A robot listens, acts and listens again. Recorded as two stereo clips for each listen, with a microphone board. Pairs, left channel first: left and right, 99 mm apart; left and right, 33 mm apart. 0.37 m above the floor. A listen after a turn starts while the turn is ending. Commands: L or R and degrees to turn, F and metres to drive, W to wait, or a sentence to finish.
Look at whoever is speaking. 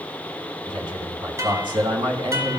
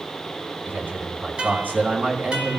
R60
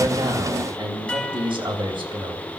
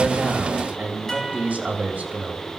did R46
R65
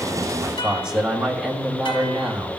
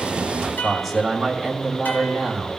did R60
Found it: a man speaking, straight ahead.